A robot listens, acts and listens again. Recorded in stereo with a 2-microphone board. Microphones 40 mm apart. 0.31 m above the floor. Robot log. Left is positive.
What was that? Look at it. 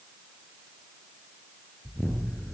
note: The explosion: about 30° left or 150° left.
cmd yaw +30
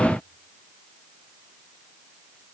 cmd idle
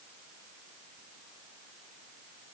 end: I heard an explosion, but can't make it out now. It was about straight ahead or 120° left.